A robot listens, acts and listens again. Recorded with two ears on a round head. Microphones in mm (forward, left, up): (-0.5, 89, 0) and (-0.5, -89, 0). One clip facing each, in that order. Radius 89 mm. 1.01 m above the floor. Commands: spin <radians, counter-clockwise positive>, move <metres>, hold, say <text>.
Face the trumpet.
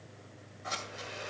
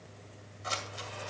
hold
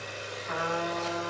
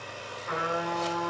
spin -1.05
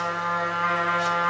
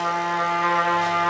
spin -1.05
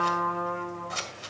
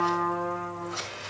say Found it: a trumpet, straight ahead.